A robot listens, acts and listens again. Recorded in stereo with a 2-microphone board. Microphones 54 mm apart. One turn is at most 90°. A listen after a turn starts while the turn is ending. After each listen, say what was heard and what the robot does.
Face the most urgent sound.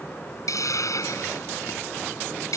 Keep listening.
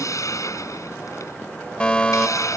The fire alarm: about 20° left or 160° left. Turn 20° left.
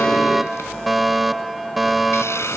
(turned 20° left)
Facing the fire alarm.